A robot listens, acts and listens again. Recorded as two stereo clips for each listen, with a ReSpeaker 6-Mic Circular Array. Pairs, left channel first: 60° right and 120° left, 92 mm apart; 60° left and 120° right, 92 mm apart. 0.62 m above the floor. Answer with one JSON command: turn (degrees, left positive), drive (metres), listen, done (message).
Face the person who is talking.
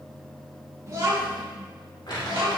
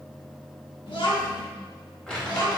{"turn": 105}
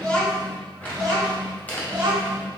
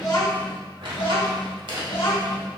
{"turn": 50}
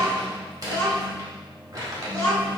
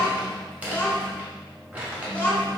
{"done": "Facing the child speaking, 2 to 4 m away."}